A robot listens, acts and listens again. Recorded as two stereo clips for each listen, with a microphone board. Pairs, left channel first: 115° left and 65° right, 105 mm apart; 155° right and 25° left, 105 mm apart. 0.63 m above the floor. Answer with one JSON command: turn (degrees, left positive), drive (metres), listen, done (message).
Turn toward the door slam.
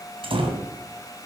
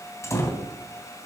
{"turn": -95}
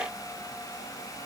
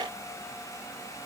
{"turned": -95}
{"done": "I heard a door slam from this way, but can't make it out now."}